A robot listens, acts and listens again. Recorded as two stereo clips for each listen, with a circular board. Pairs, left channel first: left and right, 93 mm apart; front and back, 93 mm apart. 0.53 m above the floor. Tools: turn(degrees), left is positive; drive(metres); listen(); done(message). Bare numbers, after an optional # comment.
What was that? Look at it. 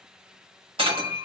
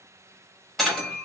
# The breaking glass: 85° right.
turn(-85)
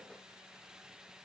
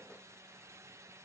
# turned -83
done("I heard breaking glass from this way, but can't make it out now.")